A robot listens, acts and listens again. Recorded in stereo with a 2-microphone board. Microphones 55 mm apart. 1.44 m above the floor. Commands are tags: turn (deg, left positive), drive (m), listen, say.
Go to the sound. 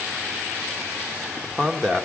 <turn deg="30"/>
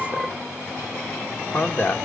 <turn deg="140"/>
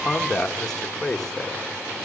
<turn deg="15"/>
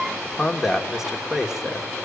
<drive m="1.0"/>
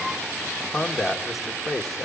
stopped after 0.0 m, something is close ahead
<say>Something is in my way. I am facing the man speaking but have not reached it.</say>